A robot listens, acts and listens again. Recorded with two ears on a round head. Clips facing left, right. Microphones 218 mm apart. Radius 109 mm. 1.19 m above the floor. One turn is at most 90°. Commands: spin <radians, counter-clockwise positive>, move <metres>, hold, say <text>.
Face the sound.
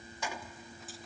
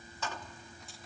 spin 0.52
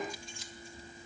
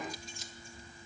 hold
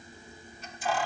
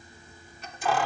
spin -0.87
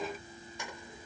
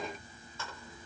spin 0.26
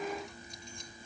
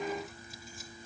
hold
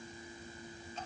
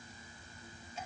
hold
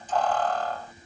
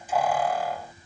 spin -0.17
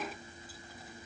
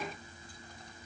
hold
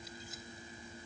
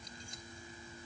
hold
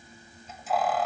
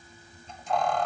say Found it: keys jangling, straight ahead.